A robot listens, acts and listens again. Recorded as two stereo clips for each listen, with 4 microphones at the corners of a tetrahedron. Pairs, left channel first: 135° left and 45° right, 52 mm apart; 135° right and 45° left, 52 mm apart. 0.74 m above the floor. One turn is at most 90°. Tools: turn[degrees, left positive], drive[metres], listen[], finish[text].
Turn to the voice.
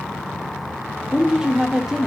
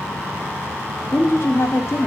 Thought: The woman speaking: 120° right.
Action: turn[-90]
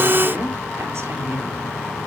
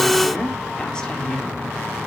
Thought: The woman speaking is now 60° right.
Action: turn[-60]
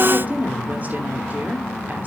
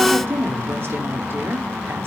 Thought: The woman speaking is now 10° left.
Action: turn[10]
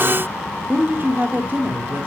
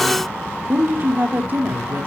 Action: finish[Facing the woman speaking, 2 to 4 m away.]